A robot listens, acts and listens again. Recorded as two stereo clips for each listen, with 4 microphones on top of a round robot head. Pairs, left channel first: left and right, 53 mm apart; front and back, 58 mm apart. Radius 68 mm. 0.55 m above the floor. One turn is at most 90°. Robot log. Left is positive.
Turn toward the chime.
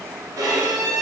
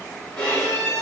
cmd idle
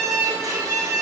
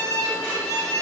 cmd idle
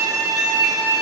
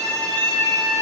end: I can't make out a chime to turn to.